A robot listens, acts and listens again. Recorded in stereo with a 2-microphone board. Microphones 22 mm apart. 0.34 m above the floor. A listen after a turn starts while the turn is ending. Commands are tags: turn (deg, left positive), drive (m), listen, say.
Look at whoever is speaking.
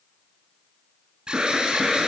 <listen/>
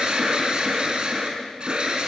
<listen/>
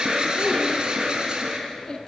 <turn deg="35"/>
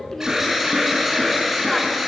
<listen/>
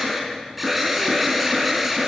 <listen/>
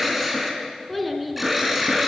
<say>Found it: a child speaking, straight ahead, 2 to 4 m away.</say>